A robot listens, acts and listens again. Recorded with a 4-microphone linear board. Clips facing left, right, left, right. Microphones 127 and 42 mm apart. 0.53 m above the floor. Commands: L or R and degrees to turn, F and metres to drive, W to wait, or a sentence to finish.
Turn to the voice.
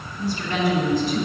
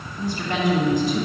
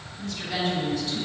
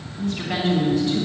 R50
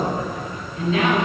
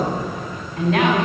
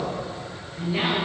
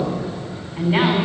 R75
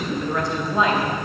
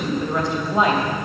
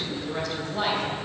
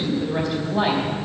R10
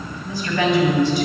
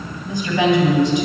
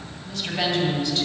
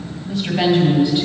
R10
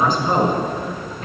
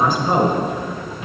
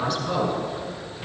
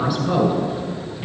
Found it: a woman speaking, straight ahead, 2 to 4 m away.